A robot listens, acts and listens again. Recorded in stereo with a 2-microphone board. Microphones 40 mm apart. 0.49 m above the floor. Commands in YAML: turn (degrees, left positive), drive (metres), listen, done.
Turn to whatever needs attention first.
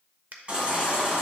turn: -30
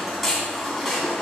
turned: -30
done: "Found it: a baby crying, straight ahead."